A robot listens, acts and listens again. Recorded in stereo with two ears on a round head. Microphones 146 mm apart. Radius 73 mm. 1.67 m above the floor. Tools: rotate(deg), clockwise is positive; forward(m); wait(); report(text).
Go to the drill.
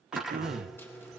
rotate(30)
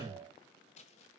wait()
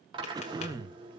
rotate(150)
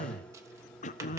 rotate(-10)
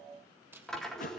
forward(1.0)
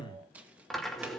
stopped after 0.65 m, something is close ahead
report("Blocked. The drill is further on, straight ahead.")